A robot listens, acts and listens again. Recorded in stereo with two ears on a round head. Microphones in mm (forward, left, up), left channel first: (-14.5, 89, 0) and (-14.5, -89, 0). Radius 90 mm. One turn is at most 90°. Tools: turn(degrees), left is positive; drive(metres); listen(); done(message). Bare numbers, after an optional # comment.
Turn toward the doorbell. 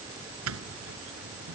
turn(-90)
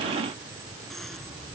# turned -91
done("Found it: a doorbell, straight ahead.")